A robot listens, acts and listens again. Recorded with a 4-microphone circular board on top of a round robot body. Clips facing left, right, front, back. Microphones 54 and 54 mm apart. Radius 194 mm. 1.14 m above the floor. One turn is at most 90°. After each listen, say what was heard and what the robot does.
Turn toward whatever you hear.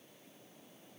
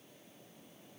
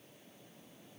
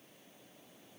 Keep listening.
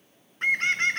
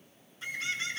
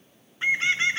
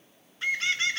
The bird: 65° left. Turn 65° left.
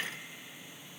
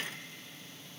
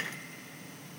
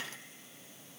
The bird is now 15° left. Turn 15° left.
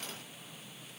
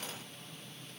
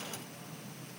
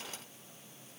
Facing the bird.